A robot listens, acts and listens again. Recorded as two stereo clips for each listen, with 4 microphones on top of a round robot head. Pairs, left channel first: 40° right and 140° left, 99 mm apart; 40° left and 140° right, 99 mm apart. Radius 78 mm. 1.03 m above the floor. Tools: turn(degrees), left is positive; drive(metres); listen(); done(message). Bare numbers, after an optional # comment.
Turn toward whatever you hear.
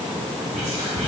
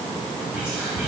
# The whispering: 140° left.
turn(140)
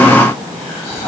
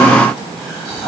# The whispering is now 40° right.
turn(-40)
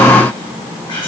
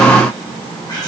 # The whispering is now 10° right.
turn(-10)
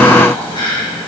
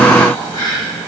done("Found it: whispering, straight ahead.")